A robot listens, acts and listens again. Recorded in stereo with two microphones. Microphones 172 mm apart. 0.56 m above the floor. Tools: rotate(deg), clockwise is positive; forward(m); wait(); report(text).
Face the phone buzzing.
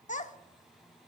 wait()
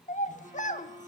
rotate(30)
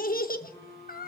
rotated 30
rotate(-15)
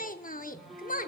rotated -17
report("Found it: a phone buzzing, straight ahead, 2 to 4 m away.")